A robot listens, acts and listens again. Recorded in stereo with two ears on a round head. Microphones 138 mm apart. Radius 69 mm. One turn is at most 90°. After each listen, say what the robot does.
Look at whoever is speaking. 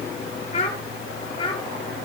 Turn 30° left.
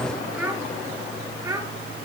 Turn 20° right.
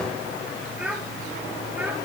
Turn 10° right.
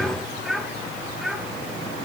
Found it: a child speaking, straight ahead.